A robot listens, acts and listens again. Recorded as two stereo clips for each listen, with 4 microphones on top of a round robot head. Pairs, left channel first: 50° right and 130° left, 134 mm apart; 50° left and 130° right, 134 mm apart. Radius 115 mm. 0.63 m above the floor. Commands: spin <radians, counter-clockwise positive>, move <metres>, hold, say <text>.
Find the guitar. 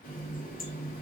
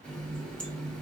hold
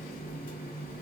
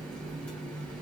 hold
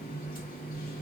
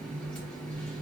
say I can't make out a guitar to turn to.